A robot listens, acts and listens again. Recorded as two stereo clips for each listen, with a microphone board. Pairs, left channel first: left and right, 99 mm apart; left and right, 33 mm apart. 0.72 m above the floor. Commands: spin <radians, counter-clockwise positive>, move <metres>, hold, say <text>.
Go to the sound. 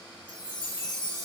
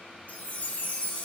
spin 0.79
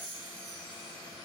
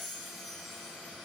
move 1.0
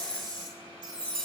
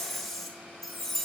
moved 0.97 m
move 1.0
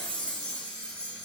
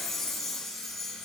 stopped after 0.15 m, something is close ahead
spin 0.17
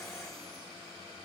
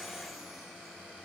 hold
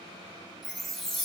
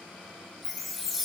say Arrived at the chime, straight ahead.